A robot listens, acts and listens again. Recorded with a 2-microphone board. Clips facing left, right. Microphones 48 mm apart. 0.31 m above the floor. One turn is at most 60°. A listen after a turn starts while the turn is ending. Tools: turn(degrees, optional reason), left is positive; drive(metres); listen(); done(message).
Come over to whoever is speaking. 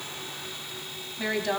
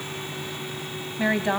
turn(degrees=-25, reason="The woman speaking: about 25° right or 155° right.")
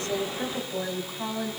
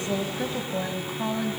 drive(metres=1.0)
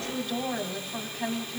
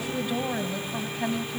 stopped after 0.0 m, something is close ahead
turn(degrees=-10, reason="The woman speaking is now 10° right.")
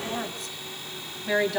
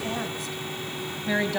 done("Something is in my way. I am facing the woman speaking but have not reached it.")